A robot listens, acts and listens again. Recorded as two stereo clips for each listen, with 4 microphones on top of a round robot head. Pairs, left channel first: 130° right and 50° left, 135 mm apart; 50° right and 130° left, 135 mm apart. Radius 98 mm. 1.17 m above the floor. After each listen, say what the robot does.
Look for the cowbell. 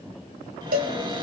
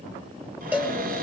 Turn 50° left.
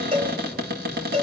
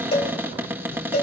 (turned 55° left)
Found it: a cowbell, straight ahead, 2 to 4 m away.